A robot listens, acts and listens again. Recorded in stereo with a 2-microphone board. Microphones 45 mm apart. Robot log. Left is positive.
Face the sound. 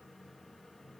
cmd idle
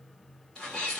cmd yaw +30
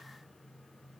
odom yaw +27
cmd idle
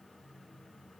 end: I heard a sneeze, but can't make it out now. It was about 20° right or 145° left.